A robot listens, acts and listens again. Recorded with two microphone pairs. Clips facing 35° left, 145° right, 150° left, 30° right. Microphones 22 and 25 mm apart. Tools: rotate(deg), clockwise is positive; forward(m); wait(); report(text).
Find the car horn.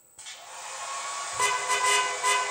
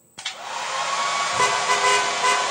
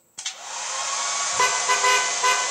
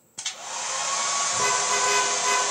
rotate(-145)
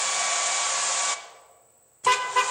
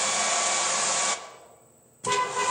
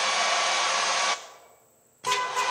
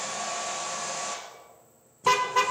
rotate(-25)
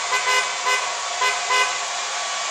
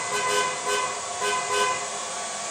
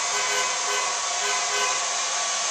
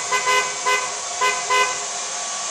rotate(15)
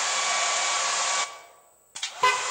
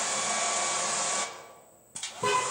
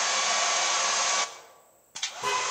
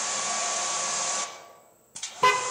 report("Found it: a car horn, straight ahead.")